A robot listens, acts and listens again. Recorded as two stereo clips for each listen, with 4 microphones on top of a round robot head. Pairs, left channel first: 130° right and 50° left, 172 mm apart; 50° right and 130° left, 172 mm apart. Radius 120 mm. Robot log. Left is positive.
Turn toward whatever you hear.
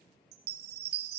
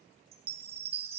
note: The chime: 75° left.
cmd yaw +75
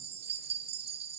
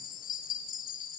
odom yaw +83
end: Facing the chime, 1 to 2 m away.